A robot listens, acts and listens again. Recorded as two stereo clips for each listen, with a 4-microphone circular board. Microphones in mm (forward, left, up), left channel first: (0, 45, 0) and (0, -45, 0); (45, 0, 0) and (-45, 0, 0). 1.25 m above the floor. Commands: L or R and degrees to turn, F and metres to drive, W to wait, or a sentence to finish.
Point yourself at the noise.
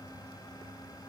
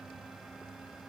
W
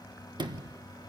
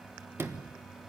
R120
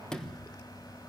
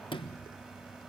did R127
L10
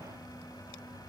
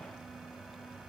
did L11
W
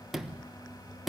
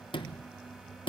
Facing the sliding door.